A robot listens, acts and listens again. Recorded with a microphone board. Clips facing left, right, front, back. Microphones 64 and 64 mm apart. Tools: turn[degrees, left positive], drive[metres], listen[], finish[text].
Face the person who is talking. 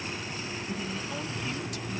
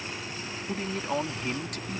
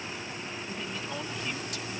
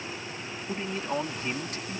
Thought: The man speaking: 125° right.
Action: turn[-125]
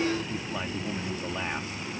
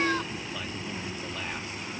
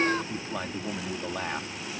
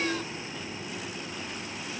Thought: The man speaking is now 25° left.
Action: turn[25]
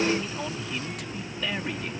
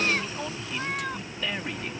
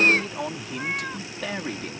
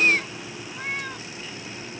Action: finish[Facing the man speaking.]